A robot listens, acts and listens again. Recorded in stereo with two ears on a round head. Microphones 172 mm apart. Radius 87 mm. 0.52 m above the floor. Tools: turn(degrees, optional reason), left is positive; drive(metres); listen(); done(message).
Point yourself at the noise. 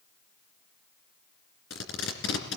turn(degrees=70, reason="The tape being pulled: about 70° left or 110° left.")
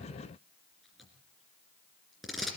done("Facing the tape being pulled.")